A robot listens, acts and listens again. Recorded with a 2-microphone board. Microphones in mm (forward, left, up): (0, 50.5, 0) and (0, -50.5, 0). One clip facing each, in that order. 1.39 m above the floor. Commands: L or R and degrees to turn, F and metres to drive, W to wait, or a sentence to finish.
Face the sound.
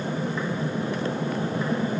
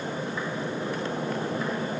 W
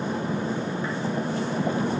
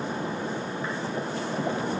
W
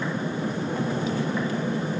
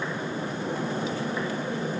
I can't make out anything to turn to.